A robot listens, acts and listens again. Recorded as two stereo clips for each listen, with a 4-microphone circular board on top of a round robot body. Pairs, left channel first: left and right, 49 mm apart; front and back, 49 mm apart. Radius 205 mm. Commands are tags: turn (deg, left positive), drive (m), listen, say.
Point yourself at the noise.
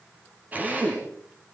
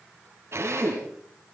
<turn deg="-145"/>
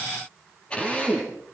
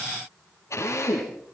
<turn deg="20"/>
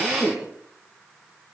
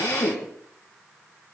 <say>Facing the drill.</say>